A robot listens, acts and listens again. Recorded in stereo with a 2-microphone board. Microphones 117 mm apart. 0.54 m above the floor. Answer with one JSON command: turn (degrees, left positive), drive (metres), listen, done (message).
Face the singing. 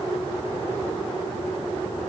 {"listen": true}
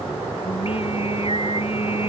{"turn": 55}
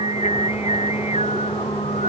{"turn": 70}
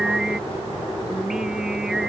{"done": "Facing the singing."}